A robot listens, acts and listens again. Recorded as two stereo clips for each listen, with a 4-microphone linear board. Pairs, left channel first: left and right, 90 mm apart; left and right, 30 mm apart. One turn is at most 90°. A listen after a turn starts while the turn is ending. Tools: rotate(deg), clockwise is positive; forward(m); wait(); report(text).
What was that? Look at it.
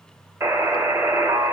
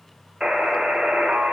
rotate(30)
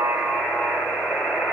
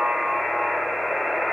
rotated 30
report("Facing the buzzer.")